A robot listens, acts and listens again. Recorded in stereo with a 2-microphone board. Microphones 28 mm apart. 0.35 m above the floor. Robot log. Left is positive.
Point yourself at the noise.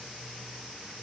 cmd idle
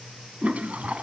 note: The toilet flushing: about 55° right or 125° right.
cmd yaw -55
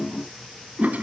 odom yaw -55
note: So it is at 70° right.
cmd yaw -70
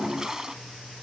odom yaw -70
note: The toilet flushing is now 25° right.
cmd yaw -25
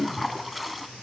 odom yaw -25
end: Facing the toilet flushing.